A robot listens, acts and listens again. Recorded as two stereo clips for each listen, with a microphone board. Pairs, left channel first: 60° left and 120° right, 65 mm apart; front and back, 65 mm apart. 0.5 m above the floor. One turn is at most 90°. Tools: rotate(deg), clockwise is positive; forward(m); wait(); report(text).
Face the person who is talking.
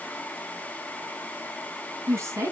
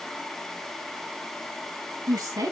rotate(90)
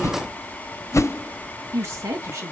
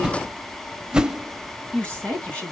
rotate(75)
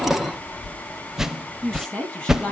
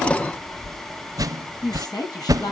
rotate(20)
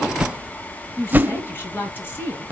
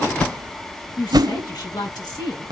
report("Found it: a woman speaking, straight ahead, over 4 m away.")